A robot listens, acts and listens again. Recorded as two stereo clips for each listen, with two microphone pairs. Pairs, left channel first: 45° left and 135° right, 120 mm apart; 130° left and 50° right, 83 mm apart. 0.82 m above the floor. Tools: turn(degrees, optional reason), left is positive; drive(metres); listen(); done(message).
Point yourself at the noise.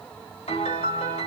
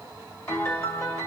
turn(degrees=70, reason="The piano: 70° left.")
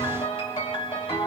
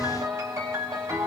done("Found it: a piano, straight ahead, 1 to 2 m away.")